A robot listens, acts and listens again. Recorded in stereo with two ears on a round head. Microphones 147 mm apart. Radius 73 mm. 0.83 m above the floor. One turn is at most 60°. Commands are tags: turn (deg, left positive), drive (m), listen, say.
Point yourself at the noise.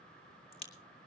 <turn deg="35"/>
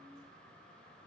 <listen/>
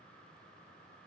<say>I heard a crack, but can't make it out now. It was about straight ahead or 110° left.</say>